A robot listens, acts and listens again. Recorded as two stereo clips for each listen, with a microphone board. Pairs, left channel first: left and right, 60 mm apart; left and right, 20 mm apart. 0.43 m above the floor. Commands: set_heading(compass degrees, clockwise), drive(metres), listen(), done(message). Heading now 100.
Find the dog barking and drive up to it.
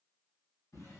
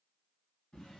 listen()
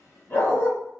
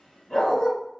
set_heading(55)
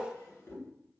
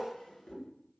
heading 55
listen()
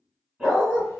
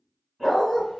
drive(1.0)
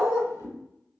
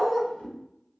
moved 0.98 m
drive(1.0)
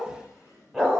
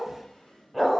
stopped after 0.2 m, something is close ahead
done("Arrived at the dog barking, straight ahead.")